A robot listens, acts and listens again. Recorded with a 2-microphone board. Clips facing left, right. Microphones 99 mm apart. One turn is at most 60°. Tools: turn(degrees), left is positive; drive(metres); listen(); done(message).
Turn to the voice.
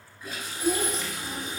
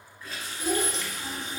turn(degrees=-60)
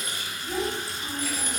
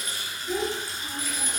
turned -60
turn(degrees=-15)
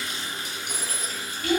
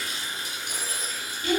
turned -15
done("Found it: a child speaking, straight ahead, 1 to 2 m away.")